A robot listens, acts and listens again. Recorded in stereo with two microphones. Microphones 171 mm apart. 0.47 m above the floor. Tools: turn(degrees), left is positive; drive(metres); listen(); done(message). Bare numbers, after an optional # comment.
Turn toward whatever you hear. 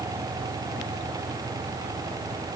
listen()
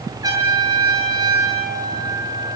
# The trumpet: about 20° right or 160° right.
turn(-20)
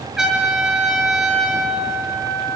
done("Found it: a trumpet, straight ahead.")